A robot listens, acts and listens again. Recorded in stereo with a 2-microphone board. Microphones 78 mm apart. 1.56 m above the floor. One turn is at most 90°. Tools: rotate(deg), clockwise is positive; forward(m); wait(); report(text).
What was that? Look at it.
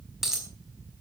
rotate(30)
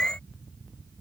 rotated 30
wait()
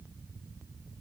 report("I heard a dropped coin, but can't make it out now. It was about 20° left or 140° right.")